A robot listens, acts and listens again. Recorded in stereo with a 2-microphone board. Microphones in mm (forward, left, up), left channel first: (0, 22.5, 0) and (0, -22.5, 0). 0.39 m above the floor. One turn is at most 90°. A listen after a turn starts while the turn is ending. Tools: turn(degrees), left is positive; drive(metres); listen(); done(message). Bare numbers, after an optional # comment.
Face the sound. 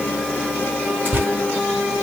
# The tearing paper: about 50° right or 130° right.
turn(-50)
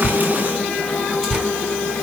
done("Facing the tearing paper.")